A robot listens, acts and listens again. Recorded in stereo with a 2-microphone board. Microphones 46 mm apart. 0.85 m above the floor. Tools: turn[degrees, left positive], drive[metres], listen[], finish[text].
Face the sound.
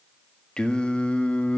Thought: The singing: about 30° left or 150° left.
Action: turn[30]
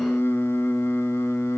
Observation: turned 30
Thought: So it is at 115° left.
Action: turn[115]
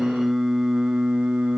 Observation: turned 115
Thought: The singing is now 20° right.
Action: turn[-20]
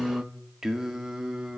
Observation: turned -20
Thought: The singing is now 15° right.
Action: turn[-15]
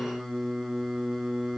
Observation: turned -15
Action: finish[Found it: singing, straight ahead.]